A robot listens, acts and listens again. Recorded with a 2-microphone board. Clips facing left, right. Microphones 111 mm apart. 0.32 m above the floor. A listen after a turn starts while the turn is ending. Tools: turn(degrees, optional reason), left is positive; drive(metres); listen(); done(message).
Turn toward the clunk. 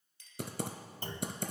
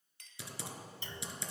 turn(degrees=45, reason="The clunk: about 45° left or 135° left.")
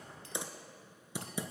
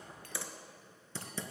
listen()
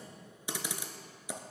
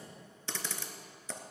done("I heard a clunk, but can't make it out now. It was about straight ahead or 90° left.")